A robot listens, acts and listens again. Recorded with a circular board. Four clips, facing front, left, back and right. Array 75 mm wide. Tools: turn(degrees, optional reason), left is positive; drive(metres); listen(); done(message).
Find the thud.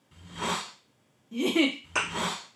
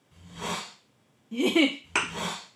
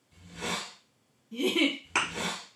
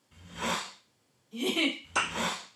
turn(degrees=115, reason="The thud: 115° left.")
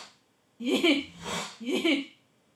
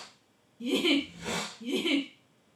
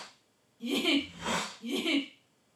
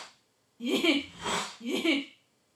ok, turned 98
turn(degrees=15, reason="Nothing new. It was at 15° left.")
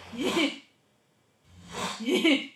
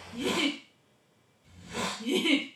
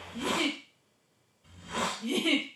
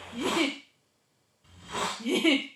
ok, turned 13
done("I heard a thud from this way, but can't make it out now.")